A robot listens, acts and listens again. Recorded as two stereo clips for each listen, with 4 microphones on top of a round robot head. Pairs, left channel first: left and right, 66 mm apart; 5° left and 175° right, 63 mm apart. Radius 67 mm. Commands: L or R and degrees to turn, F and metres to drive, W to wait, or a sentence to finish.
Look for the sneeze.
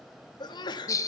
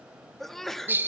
L90
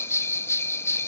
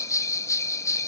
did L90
Facing where the sneeze came from. I can't hear it now.